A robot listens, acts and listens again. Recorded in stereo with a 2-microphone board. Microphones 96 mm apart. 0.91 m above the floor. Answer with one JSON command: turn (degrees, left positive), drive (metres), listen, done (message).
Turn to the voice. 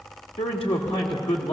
{"turn": 90}
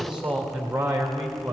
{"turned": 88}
{"turn": -15}
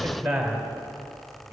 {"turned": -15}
{"turn": -10}
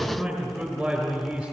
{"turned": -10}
{"done": "Facing the man speaking, 2 to 4 m away."}